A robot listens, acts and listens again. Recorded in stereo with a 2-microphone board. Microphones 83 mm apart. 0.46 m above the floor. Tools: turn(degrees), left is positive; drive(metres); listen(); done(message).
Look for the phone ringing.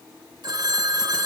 turn(degrees=-55)
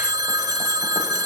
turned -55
turn(degrees=-60)
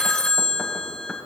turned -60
turn(degrees=10)
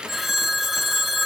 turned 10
done("Facing the phone ringing, under 1 m away.")